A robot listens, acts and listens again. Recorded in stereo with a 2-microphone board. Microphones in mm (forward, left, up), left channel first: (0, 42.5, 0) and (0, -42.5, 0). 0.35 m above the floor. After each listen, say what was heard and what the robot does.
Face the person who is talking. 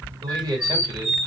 The man speaking: about 50° right or 130° right. Turn 50° right.
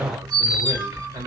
So it is at 70° right. Turn 70° right.
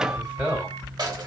The man speaking is now 15° right. Turn 15° right.
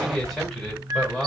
Found it: a man speaking, straight ahead.